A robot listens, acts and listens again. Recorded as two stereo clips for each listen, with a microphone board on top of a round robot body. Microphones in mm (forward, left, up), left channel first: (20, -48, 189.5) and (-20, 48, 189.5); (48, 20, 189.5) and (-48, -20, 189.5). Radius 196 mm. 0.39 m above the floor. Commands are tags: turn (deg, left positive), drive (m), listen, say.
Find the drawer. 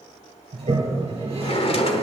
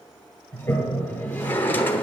<turn deg="-45"/>
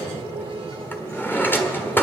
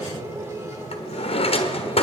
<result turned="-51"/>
<say>Found it: a drawer, straight ahead, 1 to 2 m away.</say>